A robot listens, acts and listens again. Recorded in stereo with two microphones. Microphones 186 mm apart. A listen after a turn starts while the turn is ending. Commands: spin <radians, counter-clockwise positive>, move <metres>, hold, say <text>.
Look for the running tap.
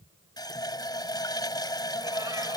spin 0.35
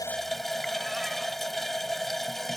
say Facing the running tap.